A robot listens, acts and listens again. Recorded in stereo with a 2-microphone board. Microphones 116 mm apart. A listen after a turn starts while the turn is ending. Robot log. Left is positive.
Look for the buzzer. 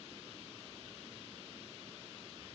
cmd idle
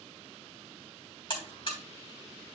note: The buzzer: about 45° left or 135° left.
cmd yaw +45
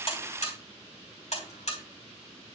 note: So it is at 85° left.
cmd yaw +85
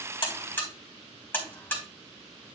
note: The buzzer is now 20° left.
cmd yaw +20
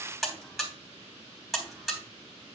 end: Found it: a buzzer, straight ahead.